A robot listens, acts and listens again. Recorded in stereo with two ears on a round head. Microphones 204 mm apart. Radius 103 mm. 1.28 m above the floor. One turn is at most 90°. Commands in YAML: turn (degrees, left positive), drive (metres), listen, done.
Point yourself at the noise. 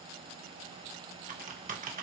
turn: -40
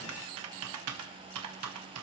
turn: -90
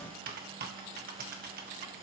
turn: -40
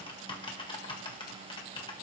turn: 20
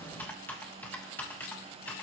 turn: 10
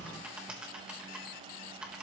done: "Facing the typing on a keyboard."